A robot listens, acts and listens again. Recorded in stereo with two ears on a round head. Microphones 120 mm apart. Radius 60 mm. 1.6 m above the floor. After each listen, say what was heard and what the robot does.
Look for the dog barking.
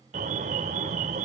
Keep listening.
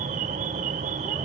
Keep listening.
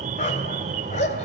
The dog barking: about 55° left or 125° left. Turn 55° left.
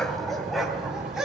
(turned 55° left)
Facing the dog barking, 2 to 4 m away.